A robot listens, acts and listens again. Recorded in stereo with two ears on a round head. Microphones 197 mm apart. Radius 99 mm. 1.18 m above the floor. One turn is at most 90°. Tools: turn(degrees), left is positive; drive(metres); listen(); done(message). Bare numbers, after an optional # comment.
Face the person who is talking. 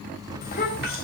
# The child speaking: about 40° left or 140° left.
turn(40)
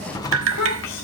# So it is at 95° left.
turn(90)
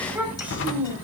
# The child speaking is now 10° right.
turn(-10)
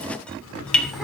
listen()
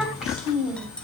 done("Found it: a child speaking, straight ahead, over 4 m away.")